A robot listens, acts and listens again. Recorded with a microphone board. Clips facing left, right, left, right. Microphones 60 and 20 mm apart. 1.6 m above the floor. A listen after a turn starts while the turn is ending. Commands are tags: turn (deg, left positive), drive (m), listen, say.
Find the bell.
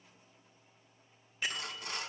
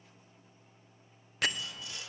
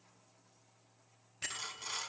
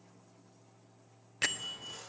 <turn deg="-90"/>
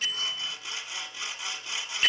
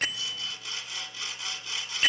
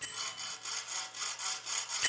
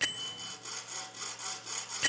<say>Facing the bell.</say>